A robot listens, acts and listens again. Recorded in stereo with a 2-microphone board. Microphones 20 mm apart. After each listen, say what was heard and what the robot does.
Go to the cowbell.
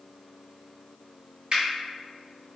Keep listening.
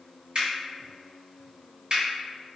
Keep listening.
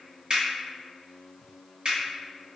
I can't make out a cowbell, only a finger snap.